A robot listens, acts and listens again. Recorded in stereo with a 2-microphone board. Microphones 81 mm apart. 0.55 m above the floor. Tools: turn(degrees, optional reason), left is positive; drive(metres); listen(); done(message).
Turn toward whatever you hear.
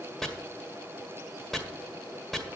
turn(degrees=30)
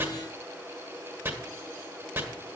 turn(degrees=-30, reason="So it is at 30° right.")
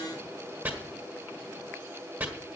turn(degrees=-25, reason="The chopping is now 25° right.")
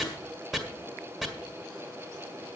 done("Facing the chopping, 1 to 2 m away.")